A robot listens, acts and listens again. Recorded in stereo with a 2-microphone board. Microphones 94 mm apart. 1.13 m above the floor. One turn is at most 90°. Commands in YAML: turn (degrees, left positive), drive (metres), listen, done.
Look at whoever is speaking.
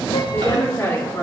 turn: 25
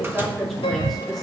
done: "Facing the woman speaking."